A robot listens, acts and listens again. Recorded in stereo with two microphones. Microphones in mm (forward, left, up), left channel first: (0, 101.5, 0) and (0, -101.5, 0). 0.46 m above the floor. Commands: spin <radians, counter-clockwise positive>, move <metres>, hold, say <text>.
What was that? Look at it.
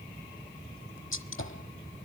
spin 1.57
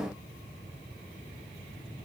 say I heard a gunshot from this way, but can't make it out now.